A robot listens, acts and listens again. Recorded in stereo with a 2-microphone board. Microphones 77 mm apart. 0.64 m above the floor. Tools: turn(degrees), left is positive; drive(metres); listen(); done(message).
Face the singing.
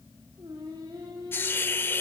turn(degrees=-65)
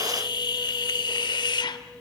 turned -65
turn(degrees=-55)
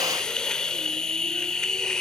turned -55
listen()
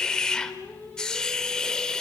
turn(degrees=25)
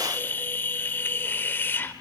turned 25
listen()
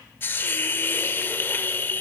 listen()
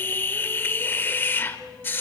done("Facing the singing, over 4 m away.")